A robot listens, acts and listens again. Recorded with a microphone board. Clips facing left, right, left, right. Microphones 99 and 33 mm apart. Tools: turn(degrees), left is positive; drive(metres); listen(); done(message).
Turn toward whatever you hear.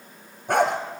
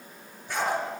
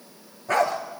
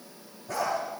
turn(degrees=55)
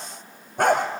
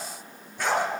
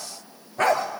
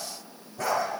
turn(degrees=55)
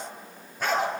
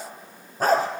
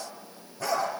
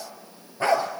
turn(degrees=-40)
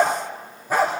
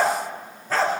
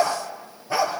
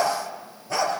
turn(degrees=15)
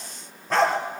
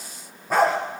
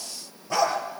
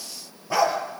turn(degrees=-10)
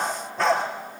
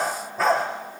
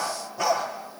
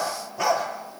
done("Found it: a dog barking, straight ahead, over 4 m away.")